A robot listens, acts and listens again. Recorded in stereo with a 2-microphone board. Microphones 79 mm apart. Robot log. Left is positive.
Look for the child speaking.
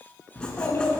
note: The child speaking: about 35° left or 145° left.
cmd yaw +35
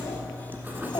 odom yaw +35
cmd idle
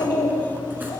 note: So it is at 105° left.
cmd yaw +105
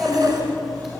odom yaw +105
end: Facing the child speaking.